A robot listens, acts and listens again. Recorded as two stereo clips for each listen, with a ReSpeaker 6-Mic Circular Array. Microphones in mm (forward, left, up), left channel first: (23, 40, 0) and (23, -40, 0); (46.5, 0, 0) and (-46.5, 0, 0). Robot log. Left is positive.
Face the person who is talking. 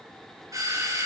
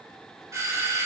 cmd idle
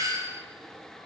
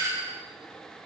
cmd idle
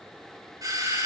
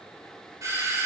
end: I can't make out anyone speaking to turn to.